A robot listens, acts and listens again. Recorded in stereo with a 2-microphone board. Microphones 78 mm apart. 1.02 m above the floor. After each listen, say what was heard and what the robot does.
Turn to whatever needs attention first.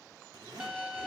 Keep listening.
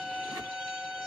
Keep listening.
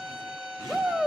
The shout: about 15° right or 165° right. Turn 15° right.
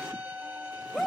Found it: a shout, straight ahead, 1 to 2 m away.